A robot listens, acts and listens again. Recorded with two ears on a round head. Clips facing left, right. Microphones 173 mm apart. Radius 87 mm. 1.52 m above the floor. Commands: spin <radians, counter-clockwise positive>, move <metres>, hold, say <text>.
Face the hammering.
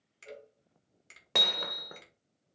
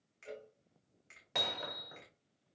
spin 1.13
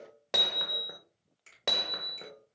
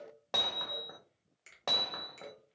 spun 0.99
spin 0.44
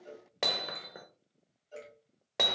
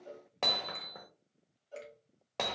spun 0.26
spin 0.17
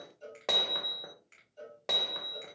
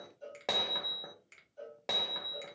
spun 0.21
say Facing the hammering, under 1 m away.